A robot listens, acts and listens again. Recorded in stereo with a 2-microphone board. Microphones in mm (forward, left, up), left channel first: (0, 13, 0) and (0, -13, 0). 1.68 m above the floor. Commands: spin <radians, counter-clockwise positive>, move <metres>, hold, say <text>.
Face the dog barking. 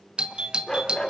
spin 0.44
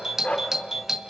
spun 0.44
spin 2.18
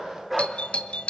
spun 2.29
say Facing the dog barking.